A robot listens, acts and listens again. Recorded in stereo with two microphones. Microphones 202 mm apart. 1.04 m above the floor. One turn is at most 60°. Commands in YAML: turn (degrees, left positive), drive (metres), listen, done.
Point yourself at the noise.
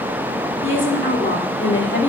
turn: 60
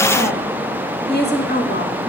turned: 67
turn: 60
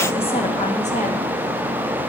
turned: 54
listen: true
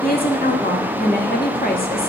turn: 50
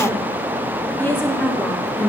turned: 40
turn: 10
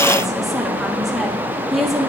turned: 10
done: "Found it: a woman speaking, straight ahead."